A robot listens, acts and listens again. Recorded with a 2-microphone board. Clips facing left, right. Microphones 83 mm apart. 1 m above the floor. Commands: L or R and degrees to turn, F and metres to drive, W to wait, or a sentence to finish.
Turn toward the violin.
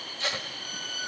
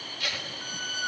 R65
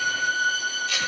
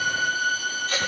Facing the violin, over 4 m away.